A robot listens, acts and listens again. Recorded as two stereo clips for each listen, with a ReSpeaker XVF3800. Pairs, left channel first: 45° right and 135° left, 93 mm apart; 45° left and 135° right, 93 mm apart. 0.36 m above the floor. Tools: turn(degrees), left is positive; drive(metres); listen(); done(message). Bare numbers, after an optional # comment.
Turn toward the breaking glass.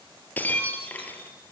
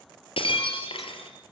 # The breaking glass: 25° left.
turn(25)
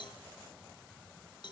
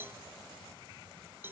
done("I heard breaking glass from this way, but can't make it out now.")